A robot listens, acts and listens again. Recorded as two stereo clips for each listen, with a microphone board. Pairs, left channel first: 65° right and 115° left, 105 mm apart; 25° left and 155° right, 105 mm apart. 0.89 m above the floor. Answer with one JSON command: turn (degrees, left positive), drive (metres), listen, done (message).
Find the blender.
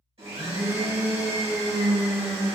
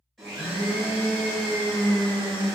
{"turn": 110}
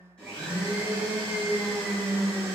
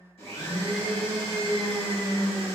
{"turn": 10}
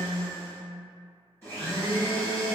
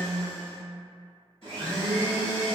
{"done": "Found it: a blender, straight ahead, 1 to 2 m away."}